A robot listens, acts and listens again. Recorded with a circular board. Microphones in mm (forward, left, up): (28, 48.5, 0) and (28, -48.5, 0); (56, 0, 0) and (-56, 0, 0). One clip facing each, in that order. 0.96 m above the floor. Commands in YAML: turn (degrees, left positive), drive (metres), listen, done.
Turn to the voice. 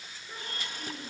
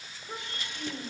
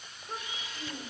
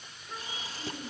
turn: -50
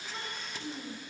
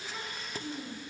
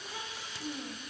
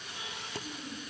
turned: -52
done: "Facing the child speaking."